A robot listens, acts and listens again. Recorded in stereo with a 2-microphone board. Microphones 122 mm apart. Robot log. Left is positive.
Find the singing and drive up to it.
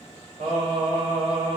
note: The singing: about 40° right or 140° right.
cmd yaw -40
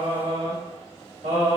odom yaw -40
note: So it is at 100° right.
cmd yaw -100
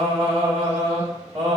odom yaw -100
note: The singing is now 40° right.
cmd yaw -40
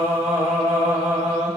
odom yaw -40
note: The singing is now 15° right.
cmd yaw -15
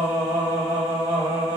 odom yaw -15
note: The singing is now 10° right.
cmd yaw -10
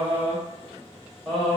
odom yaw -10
cmd fwd 1.0
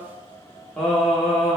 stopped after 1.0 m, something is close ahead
end: Arrived at the singing, straight ahead.